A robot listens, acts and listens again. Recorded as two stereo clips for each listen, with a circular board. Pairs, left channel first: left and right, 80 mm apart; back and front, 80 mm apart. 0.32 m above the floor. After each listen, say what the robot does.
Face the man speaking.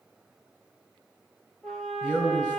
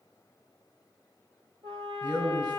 Turn 25° right.
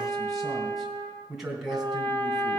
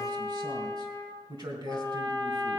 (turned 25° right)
Facing the man speaking, 2 to 4 m away.